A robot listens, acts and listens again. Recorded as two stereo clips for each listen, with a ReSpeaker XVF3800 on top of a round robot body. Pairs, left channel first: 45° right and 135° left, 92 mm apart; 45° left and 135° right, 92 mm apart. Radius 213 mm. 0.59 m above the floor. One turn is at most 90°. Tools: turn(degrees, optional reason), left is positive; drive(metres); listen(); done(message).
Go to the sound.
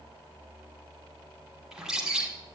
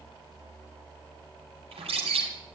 turn(degrees=-90, reason="The bird: 140° right.")
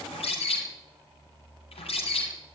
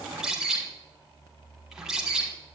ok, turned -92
turn(degrees=-50, reason="The bird is now 50° right.")
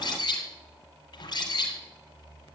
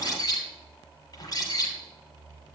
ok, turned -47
drive(metres=1.0)
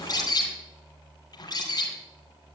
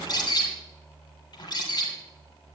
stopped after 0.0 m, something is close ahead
done("Something is in my way. I am facing the bird but have not reached it.")